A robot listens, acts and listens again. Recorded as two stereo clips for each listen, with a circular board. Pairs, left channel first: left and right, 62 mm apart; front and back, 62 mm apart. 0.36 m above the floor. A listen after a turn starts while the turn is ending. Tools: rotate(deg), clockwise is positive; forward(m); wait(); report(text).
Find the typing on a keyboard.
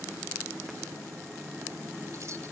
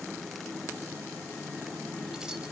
wait()
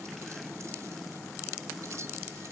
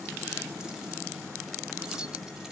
wait()
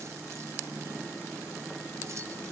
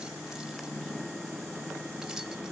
report("I can't make out typing on a keyboard to turn to.")